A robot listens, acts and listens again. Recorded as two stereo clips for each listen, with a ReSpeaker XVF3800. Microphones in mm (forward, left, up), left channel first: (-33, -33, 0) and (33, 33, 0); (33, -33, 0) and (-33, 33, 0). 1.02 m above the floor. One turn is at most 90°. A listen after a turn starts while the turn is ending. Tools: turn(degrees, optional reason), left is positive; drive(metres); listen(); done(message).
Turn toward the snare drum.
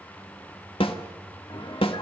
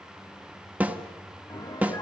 turn(degrees=-90, reason="The snare drum: 150° right.")
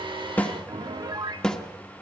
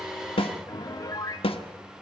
turn(degrees=-50, reason="The snare drum is now 50° right.")
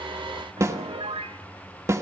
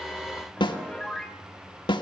turn(degrees=-15, reason="The snare drum is now 15° right.")
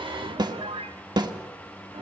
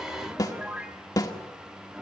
done("Facing the snare drum, 1 to 2 m away.")